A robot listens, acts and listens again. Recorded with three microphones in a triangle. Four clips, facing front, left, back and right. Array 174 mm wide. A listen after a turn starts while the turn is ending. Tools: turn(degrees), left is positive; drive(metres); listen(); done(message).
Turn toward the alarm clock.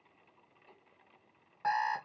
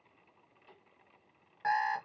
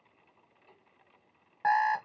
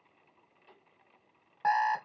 turn(degrees=-135)
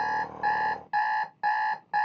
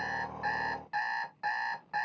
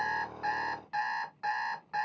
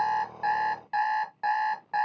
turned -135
turn(degrees=-30)
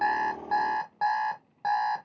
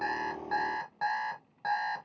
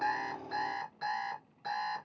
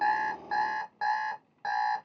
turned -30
done("Facing the alarm clock.")